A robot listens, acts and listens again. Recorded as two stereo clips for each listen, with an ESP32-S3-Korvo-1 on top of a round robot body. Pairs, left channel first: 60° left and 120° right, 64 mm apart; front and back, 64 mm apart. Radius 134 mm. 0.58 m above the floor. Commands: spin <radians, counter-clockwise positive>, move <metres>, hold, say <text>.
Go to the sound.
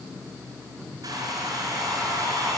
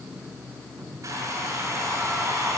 spin -2.44
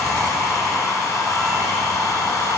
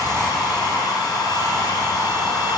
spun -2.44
spin 0.35
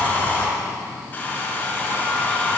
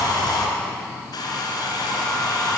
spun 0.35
move 1.0
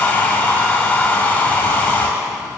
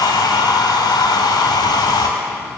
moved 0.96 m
move 1.0
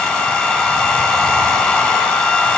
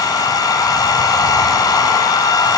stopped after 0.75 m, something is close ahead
spin -0.17
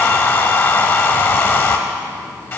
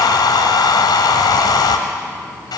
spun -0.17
say I am next to the hair dryer.